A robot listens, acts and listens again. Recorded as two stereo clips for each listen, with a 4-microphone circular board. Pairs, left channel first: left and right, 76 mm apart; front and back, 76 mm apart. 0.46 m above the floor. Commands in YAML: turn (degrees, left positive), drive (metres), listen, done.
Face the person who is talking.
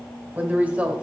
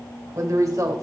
turn: -155
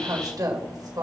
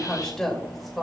turn: -90
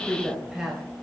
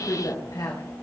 turn: -10
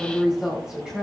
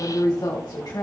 turn: -10
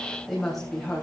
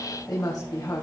done: "Facing the woman speaking."